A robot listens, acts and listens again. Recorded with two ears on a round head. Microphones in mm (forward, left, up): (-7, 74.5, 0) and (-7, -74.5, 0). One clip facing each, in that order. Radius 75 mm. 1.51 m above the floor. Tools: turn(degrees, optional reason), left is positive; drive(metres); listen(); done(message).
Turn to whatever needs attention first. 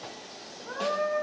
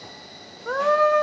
turn(degrees=-90)
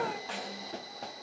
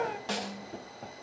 listen()
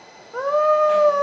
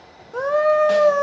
turn(degrees=-10, reason="The scream is now 10° right.")
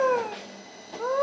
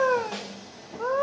done("Facing the scream.")